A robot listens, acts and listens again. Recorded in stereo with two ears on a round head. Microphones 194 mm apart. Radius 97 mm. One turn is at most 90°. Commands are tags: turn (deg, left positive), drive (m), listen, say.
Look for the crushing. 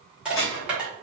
<turn deg="-30"/>
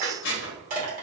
<turn deg="-90"/>
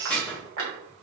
<turn deg="-80"/>
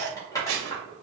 <turn deg="15"/>
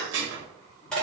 <say>Found it: crushing, straight ahead, 1 to 2 m away.</say>